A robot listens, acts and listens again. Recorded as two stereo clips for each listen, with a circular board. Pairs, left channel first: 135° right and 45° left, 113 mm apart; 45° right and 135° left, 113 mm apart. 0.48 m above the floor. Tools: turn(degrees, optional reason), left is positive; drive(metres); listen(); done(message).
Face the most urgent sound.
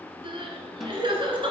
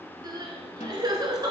turn(degrees=85, reason="The crying: 85° left.")
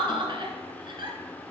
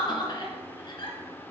done("Facing the crying, 1 to 2 m away.")